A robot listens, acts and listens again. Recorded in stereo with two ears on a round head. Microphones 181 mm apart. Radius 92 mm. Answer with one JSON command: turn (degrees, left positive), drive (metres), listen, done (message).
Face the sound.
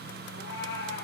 {"turn": 55}
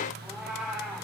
{"done": "Facing the cat meowing, 2 to 4 m away."}